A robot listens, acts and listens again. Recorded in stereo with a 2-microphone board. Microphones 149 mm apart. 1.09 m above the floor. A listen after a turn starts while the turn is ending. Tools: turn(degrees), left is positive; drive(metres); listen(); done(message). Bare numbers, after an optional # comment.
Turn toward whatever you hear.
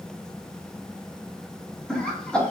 turn(30)
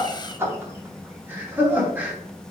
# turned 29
# So it is at 10° right.
turn(-10)
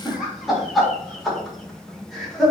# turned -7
done("Found it: laughter, straight ahead, 2 to 4 m away.")